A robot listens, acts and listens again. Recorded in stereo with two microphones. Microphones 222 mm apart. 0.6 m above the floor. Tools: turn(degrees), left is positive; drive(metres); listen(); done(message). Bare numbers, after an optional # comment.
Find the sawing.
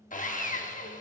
# The sawing: about 35° left or 145° left.
turn(35)
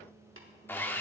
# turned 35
# So it is at 10° left.
turn(10)
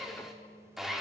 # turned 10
done("Facing the sawing, under 1 m away.")